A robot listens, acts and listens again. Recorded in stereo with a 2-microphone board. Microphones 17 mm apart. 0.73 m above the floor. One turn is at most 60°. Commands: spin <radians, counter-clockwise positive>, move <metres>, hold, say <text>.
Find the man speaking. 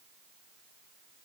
hold
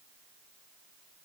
hold
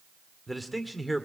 spin -0.52
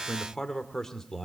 spin 0.35
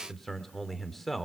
say Found it: a man speaking, straight ahead, 2 to 4 m away.